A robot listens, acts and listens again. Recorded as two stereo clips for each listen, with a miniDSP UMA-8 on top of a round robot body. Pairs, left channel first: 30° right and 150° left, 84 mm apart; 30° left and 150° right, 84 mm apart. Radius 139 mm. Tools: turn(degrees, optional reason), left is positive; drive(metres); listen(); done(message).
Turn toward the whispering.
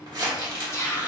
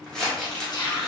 turn(degrees=20, reason="The whispering: 20° left.")
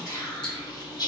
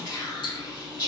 done("Facing the whispering, 1 to 2 m away.")